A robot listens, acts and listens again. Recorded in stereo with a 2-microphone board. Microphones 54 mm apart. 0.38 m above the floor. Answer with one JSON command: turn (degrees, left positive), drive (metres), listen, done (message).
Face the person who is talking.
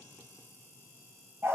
{"listen": true}
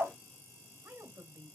{"turn": -50}
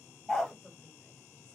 {"listen": true}
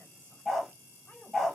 {"turn": 30}
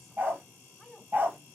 {"done": "Facing the woman speaking."}